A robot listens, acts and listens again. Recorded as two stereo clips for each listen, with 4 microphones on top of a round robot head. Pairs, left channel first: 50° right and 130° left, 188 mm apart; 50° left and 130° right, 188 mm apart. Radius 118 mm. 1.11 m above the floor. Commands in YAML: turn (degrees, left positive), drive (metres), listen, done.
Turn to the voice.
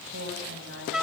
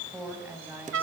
turn: 150
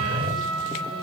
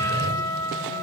listen: true
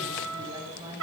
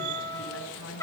turn: 60
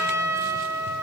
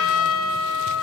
listen: true
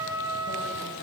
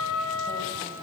listen: true
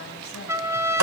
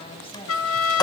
done: "Facing where the woman speaking came from. I can't hear it now."